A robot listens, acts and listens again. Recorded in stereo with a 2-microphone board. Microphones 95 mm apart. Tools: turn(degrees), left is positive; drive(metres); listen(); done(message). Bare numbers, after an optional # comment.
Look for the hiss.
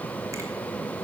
listen()
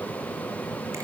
listen()
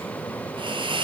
# The hiss: about 60° right or 120° right.
turn(-60)
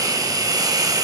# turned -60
# So it is at 45° right.
turn(-45)
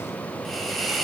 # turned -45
done("Facing the hiss, 2 to 4 m away.")